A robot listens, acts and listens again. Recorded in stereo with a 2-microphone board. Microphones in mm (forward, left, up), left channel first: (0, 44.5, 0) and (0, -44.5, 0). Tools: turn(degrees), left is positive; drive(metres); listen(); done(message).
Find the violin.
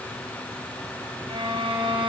turn(degrees=-90)
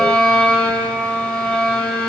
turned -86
done("Found it: a violin, straight ahead.")